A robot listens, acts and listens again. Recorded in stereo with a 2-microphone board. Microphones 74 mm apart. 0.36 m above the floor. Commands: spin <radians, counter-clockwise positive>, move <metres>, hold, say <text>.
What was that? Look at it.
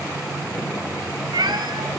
spin -1.57
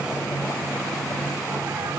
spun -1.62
hold
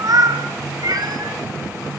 spin -1.05
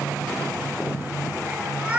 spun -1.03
spin -0.26
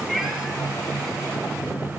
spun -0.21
hold
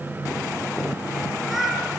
say Facing the cat meowing, 2 to 4 m away.